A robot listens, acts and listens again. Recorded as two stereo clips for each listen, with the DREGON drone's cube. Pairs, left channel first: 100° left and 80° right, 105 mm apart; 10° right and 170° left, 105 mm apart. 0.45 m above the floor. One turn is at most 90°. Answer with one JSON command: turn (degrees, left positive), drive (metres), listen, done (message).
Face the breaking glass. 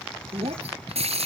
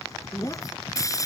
{"turn": -70}
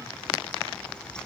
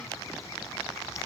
{"done": "Facing where the breaking glass came from. I can't hear it now."}